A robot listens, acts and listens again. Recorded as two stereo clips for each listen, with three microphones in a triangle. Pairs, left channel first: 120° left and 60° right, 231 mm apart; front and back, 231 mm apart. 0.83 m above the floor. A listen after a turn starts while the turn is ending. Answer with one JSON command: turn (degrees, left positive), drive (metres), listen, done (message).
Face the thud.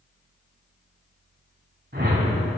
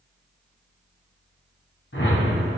{"listen": true}
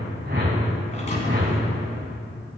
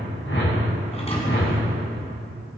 {"turn": 65}
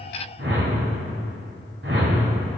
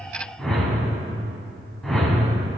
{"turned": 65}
{"done": "Facing where the thud came from. I can't hear it now."}